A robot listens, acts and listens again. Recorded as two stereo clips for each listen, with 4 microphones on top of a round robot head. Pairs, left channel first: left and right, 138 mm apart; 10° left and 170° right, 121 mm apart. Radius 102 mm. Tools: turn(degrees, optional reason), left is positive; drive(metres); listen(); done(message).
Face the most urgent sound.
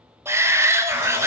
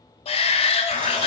turn(degrees=-20, reason="The shout: 20° right.")
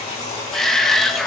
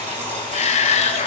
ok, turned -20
done("Found it: a shout, straight ahead, under 1 m away.")